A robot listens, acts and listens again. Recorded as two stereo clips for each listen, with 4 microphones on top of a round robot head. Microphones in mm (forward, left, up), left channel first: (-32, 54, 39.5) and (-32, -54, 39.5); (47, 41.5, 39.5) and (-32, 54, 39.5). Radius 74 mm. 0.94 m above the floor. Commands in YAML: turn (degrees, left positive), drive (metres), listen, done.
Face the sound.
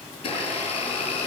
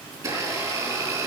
turn: 130
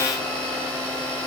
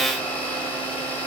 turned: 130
turn: -20
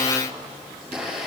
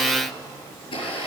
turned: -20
done: "Found it: a blender, straight ahead."